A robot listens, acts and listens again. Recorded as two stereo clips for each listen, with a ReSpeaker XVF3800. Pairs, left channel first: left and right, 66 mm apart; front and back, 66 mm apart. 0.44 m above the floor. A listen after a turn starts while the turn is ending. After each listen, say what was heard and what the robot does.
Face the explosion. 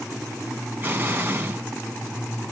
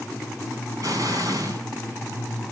The explosion: 150° right. Turn 150° right.
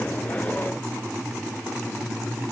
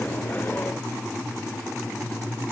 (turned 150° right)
Facing where the explosion came from. I can't hear it now.